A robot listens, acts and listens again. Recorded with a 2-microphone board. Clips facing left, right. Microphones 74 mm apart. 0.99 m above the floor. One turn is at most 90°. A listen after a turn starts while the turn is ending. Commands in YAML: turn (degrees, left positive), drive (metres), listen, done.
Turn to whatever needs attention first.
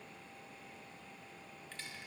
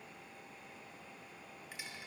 listen: true
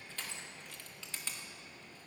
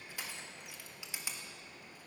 listen: true
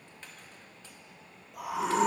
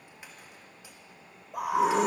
turn: -60
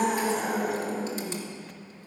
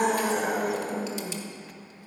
turn: -60
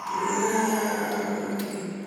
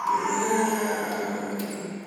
done: "Found it: a scream, straight ahead, 2 to 4 m away."